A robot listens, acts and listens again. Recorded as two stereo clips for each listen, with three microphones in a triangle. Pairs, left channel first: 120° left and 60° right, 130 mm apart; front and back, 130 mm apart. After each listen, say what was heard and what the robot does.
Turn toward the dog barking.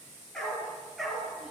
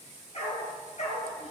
The dog barking: 30° left. Turn 30° left.
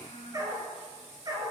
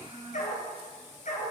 Facing the dog barking.